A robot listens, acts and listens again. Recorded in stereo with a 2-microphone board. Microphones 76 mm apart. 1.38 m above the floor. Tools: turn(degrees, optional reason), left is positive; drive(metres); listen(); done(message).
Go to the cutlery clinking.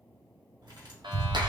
turn(degrees=-70, reason="The cutlery clinking: about 70° right or 110° right.")
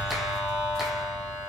listen()
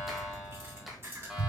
turn(degrees=-35, reason="So it is at 35° right.")
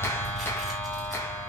listen()
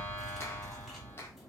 drive(metres=1.0)
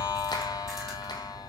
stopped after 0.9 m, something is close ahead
listen()
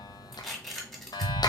done("I am next to the cutlery clinking.")